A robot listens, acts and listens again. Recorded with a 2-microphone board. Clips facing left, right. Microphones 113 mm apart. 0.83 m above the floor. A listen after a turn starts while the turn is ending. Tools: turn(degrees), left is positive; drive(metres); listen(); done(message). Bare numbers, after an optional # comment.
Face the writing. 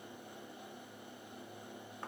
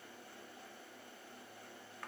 listen()
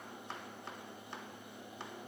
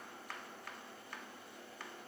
listen()
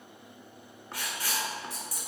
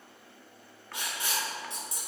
# The writing: about 25° right or 155° right.
turn(-25)
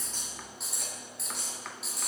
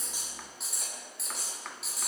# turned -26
done("Found it: writing, straight ahead, 2 to 4 m away.")